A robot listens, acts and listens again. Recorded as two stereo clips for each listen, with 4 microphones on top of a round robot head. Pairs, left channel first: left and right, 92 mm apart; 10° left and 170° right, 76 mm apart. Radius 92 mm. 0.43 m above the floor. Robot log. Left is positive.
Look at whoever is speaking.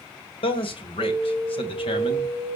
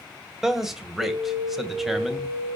note: The man speaking: 105° left.
cmd yaw +105
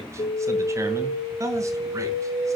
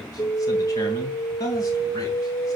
note: The man speaking is now 35° right.
cmd yaw -35
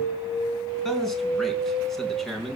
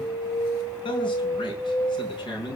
end: Found it: a man speaking, straight ahead, over 4 m away.